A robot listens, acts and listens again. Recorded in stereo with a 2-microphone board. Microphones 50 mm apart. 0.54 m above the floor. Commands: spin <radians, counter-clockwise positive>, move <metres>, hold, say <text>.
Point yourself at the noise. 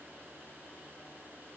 hold
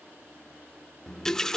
spin 0.52
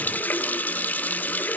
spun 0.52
spin 2.44
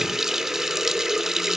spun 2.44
spin -0.17
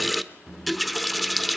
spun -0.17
say Facing the running tap, under 1 m away.